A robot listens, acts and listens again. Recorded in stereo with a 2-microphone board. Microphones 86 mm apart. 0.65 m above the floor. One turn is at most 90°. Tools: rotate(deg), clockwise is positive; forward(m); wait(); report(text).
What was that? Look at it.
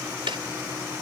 rotate(90)
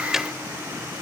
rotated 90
wait()
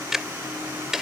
report("Facing the ticking.")